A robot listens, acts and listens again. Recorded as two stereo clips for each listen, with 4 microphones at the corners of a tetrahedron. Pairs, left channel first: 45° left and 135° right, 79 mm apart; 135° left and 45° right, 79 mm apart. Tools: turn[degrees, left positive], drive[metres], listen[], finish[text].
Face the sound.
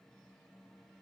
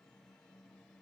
Action: listen[]
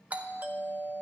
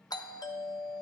Thought: The doorbell: 155° left.
Action: turn[155]
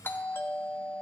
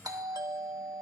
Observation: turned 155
Thought: The doorbell is now 15° right.
Action: turn[-15]
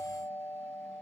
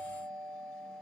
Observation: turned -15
Action: finish[Found it: a doorbell, straight ahead.]